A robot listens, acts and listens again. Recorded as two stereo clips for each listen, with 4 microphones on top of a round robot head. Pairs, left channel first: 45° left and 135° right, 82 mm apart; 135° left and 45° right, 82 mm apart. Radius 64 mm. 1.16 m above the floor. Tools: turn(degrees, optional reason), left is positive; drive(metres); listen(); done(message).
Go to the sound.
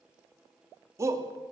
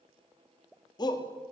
turn(degrees=170, reason="The shout: 170° left.")
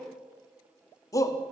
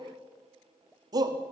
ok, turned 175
drive(metres=1.0)
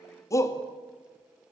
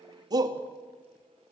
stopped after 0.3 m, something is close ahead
done("Something is in my way. I am facing the shout but have not reached it.")